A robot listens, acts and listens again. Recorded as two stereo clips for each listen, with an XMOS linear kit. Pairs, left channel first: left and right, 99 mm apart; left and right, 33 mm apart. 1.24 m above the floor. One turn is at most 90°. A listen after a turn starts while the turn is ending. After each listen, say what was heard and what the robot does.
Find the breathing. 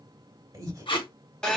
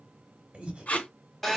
The breathing: about 35° right or 145° right. Turn 35° right.
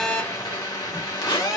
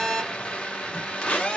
Keep listening.
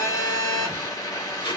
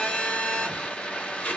Keep listening.
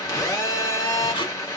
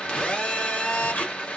I heard breathing, but can't make it out now. It was about straight ahead or 110° right.